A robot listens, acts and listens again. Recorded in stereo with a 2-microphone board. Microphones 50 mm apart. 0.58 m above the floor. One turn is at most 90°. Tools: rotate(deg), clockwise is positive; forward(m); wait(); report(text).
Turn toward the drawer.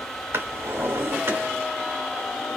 rotate(60)
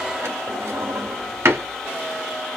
rotate(60)
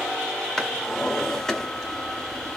rotate(-15)
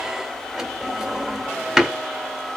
report("Found it: a drawer, straight ahead, 1 to 2 m away.")